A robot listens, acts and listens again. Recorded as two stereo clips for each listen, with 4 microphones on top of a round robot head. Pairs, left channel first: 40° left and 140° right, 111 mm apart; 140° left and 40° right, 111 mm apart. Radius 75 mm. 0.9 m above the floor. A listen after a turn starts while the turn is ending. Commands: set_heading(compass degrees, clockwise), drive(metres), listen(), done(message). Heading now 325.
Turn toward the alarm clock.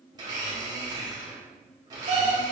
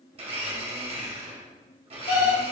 set_heading(150)
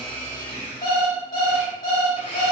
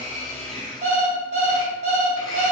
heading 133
set_heading(148)
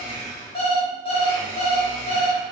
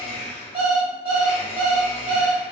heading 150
done("Found it: an alarm clock, straight ahead.")